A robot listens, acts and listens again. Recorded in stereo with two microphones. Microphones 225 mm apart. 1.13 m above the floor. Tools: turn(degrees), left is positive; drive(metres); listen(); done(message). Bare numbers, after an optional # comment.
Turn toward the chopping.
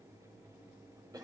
listen()
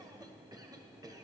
listen()
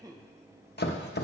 # The chopping: about 50° left or 130° left.
turn(50)
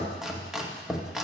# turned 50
done("Facing the chopping, 1 to 2 m away.")